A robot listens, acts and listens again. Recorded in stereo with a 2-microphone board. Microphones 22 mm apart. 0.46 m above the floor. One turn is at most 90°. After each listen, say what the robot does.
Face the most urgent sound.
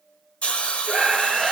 Turn 30° right.
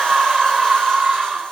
Turn 90° right.
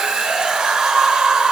Turn 60° right.
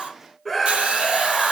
Facing the scream, 1 to 2 m away.